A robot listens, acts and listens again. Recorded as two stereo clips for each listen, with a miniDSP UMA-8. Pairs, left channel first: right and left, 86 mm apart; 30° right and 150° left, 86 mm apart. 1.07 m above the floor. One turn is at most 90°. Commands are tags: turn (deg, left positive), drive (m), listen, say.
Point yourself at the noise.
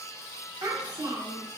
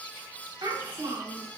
<turn deg="90"/>
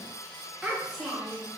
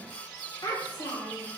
<say>Found it: a child speaking, straight ahead, 1 to 2 m away.</say>